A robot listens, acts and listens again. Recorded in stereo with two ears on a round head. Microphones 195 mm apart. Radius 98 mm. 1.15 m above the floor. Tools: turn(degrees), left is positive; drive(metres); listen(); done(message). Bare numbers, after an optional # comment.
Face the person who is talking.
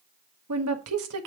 # The woman speaking: about 75° right or 105° right.
turn(-75)
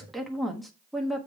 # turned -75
done("Found it: a woman speaking, straight ahead, 1 to 2 m away.")